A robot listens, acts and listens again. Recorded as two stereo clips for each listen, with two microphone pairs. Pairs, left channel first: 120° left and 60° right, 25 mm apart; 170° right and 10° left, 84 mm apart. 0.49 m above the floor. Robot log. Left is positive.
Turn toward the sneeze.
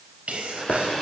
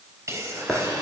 note: The sneeze: 40° right.
cmd yaw -40
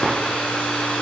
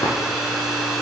end: I heard a sneeze from this way, but can't make it out now.